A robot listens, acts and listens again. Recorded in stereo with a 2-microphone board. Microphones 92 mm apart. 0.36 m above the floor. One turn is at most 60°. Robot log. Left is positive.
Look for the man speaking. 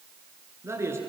note: The man speaking: about 30° right or 150° right.
cmd yaw -30
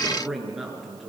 end: Facing the man speaking.